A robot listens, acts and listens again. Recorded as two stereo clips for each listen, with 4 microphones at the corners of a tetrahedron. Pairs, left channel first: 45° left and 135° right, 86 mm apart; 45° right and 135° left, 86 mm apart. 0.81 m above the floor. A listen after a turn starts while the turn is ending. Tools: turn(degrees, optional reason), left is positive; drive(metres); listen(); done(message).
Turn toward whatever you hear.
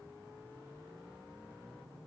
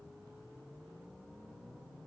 listen()
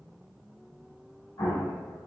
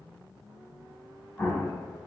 turn(degrees=20, reason="The explosion: 20° left.")
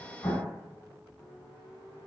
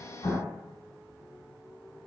done("Found it: an explosion, straight ahead, 1 to 2 m away.")